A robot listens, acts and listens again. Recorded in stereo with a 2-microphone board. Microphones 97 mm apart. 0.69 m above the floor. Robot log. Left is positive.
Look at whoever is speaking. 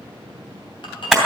cmd idle
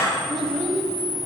cmd yaw +30
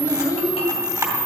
note: So it is at 145° left.
cmd yaw +145
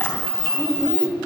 note: The child speaking is now 20° right.
cmd yaw -20
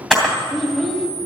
end: Found it: a child speaking, straight ahead.